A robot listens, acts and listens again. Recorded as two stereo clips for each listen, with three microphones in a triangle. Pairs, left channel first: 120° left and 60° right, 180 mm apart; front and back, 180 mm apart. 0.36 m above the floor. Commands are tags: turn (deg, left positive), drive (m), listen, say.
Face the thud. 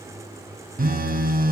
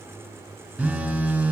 <listen/>
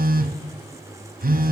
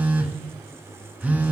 <listen/>
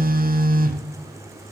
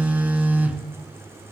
<say>I can't make out a thud, only a phone buzzing.</say>